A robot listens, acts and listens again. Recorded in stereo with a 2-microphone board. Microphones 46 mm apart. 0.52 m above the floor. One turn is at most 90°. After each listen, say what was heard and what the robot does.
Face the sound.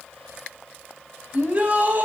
The shout: about 35° right or 145° right. Turn 35° right.
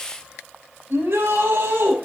So it is at 110° right. Turn 90° right.
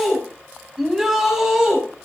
The shout is now 10° right. Turn 10° right.
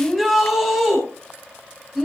Facing the shout, over 4 m away.